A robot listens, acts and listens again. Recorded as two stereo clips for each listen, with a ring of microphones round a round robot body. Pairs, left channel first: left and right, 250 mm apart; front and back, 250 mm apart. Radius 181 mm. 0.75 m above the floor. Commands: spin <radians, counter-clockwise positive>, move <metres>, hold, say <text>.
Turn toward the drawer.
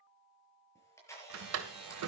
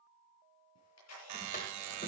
spin -1.13
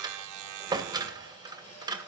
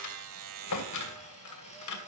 spin -0.26
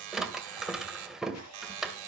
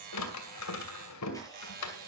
say Found it: a drawer, straight ahead.